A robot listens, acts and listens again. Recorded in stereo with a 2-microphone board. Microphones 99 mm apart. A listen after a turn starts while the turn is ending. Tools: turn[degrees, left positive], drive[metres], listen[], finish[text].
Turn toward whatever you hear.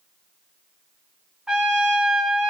Action: turn[-30]
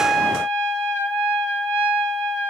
Thought: So it is at 25° left.
Action: turn[25]
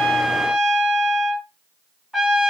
Action: finish[Found it: a trumpet, straight ahead.]